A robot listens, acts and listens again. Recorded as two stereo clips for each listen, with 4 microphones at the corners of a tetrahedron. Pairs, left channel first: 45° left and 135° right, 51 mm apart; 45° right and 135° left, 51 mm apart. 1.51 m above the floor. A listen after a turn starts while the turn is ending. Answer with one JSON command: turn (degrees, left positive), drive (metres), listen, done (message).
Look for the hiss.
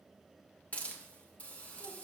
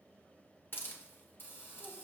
{"turn": -10}
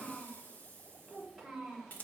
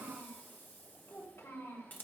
{"done": "Found it: a hiss, straight ahead."}